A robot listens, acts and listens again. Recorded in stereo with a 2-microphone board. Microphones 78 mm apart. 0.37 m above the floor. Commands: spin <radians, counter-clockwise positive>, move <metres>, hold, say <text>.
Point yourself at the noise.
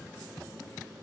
hold
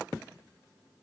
hold
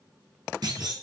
spin -1.05
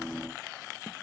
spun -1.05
hold
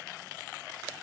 say I heard a clunk, but can't make it out now. It was about straight ahead or 60° right.